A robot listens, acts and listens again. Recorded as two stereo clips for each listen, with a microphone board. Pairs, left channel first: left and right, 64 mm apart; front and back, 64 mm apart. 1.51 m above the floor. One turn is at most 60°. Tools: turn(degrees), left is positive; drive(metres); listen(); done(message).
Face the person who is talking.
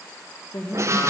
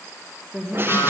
turn(degrees=60)
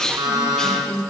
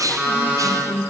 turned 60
turn(degrees=45)
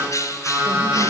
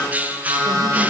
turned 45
listen()
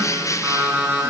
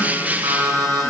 listen()
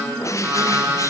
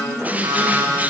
done("I heard a woman speaking from this way, but can't make it out now.")